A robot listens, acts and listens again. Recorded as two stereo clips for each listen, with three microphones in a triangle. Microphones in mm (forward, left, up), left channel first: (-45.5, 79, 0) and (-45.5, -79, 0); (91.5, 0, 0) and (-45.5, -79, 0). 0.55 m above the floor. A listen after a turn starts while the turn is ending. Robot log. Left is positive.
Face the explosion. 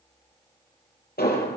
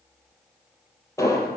note: The explosion: 100° left.
cmd yaw +100
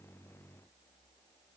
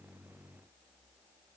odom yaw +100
end: I heard an explosion from this way, but can't make it out now.